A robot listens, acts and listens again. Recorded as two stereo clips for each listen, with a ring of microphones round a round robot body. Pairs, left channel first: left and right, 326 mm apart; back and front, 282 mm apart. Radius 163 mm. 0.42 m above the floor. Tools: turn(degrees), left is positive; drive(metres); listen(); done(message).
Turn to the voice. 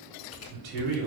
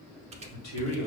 turn(degrees=-140)
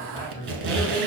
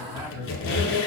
turn(degrees=15)
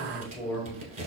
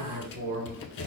done("Found it: a man speaking, straight ahead.")